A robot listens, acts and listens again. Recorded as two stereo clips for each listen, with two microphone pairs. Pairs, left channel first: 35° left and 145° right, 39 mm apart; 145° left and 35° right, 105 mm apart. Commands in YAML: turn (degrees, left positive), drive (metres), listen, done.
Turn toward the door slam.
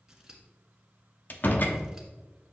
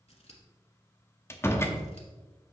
turn: 75
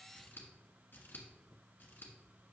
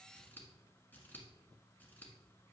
done: "Facing where the door slam came from. I can't hear it now."